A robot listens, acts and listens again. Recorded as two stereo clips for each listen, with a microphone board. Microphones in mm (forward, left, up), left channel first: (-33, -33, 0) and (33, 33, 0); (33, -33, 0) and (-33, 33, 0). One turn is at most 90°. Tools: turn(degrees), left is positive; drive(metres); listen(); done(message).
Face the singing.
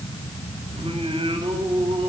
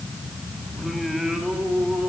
turn(degrees=50)
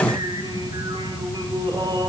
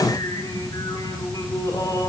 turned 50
done("Found it: singing, straight ahead, over 4 m away.")